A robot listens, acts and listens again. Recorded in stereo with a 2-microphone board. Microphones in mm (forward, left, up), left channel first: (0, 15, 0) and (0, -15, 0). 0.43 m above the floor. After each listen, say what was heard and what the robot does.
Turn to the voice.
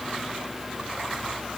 Keep listening.
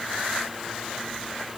Keep listening.
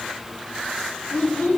Turn 90° left.
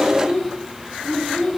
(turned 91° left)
So it is at 10° right. Turn 10° right.
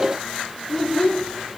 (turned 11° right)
Facing the child speaking, 1 to 2 m away.